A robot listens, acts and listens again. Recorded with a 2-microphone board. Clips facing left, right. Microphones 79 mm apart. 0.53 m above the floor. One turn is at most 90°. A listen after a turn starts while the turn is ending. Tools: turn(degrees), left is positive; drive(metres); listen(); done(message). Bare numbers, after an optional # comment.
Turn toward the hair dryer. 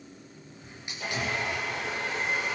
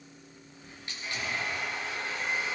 turn(90)
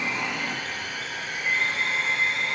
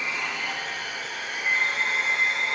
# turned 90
# So it is at 10° right.
turn(-10)
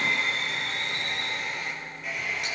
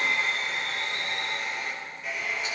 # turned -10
done("Facing the hair dryer, over 4 m away.")